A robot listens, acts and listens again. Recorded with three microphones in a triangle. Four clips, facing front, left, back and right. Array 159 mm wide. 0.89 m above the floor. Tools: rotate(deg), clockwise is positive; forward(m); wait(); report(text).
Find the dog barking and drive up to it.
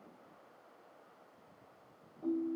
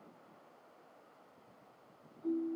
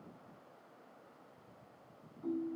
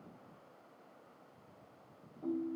wait()
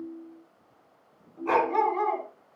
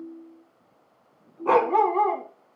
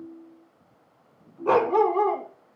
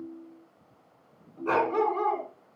rotate(-100)
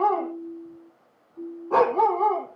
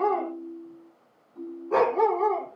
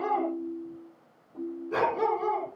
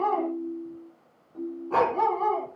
forward(1.0)
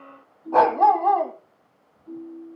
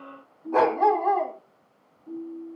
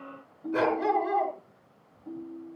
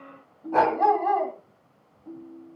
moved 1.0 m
forward(1.0)
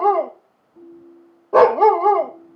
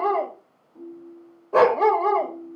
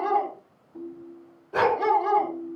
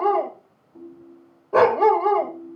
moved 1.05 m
forward(1.0)
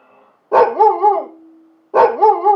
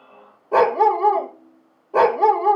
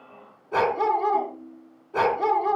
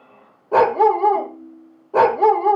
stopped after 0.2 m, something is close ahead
report("I am next to the dog barking.")